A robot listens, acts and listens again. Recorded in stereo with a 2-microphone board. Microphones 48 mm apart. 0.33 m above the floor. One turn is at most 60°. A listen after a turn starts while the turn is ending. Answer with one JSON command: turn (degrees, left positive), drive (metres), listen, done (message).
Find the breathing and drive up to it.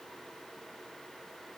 {"listen": true}
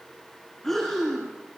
{"turn": 30}
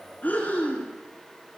{"turn": 60}
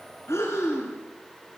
{"turn": 60}
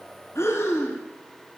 {"turn": 60}
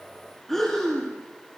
{"turn": 10}
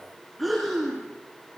{"drive": 1.0}
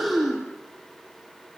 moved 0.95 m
{"drive": 1.0}
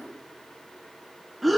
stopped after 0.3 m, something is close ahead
{"done": "Something is in my way. I am facing the breathing but have not reached it."}